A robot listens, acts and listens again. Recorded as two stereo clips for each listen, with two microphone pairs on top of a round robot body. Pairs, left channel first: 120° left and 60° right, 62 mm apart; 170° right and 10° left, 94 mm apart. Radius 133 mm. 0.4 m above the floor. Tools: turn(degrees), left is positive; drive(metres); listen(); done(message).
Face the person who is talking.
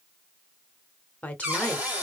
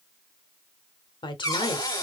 turn(degrees=180)
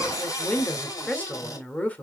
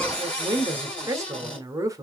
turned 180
turn(degrees=60)
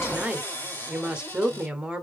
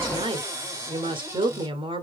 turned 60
turn(degrees=15)
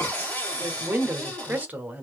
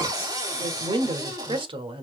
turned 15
done("Found it: a woman speaking, straight ahead.")